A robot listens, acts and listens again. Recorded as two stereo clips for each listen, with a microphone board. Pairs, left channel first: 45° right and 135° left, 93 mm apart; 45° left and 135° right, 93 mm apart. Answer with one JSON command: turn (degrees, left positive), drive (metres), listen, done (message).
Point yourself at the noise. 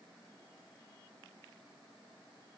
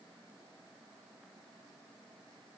{"listen": true}
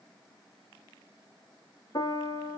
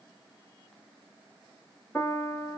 {"turn": -20}
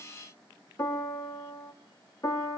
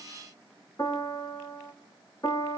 {"done": "Facing the piano."}